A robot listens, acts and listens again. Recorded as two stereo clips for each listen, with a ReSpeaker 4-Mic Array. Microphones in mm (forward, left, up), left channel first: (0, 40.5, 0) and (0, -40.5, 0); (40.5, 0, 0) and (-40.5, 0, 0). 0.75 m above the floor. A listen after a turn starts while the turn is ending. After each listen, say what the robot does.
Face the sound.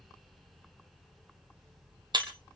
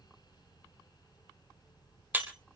Turn 110° right.
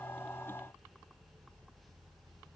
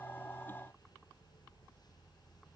Facing where the breaking glass came from. I can't hear it now.